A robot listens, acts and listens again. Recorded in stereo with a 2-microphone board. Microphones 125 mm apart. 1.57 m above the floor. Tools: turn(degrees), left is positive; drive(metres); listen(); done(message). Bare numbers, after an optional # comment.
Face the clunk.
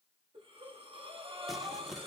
listen()
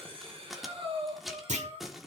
# The clunk: about 65° right or 115° right.
turn(-65)
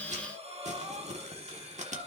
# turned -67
listen()
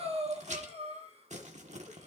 done("I heard a clunk, but can't make it out now. It was about straight ahead or 45° right.")